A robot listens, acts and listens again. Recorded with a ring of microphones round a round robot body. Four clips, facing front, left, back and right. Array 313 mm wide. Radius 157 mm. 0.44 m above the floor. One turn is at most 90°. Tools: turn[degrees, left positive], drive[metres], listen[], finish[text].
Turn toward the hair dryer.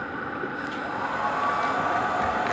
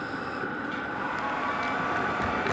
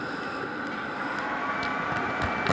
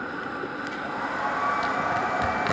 Thought: The hair dryer: 40° right.
Action: turn[-40]
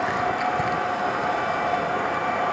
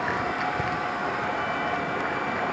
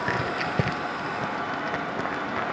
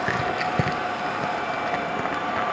Thought: The hair dryer is now 15° right.
Action: turn[-15]
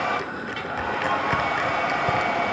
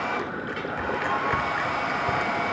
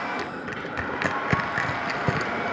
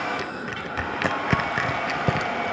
Action: finish[Facing the hair dryer.]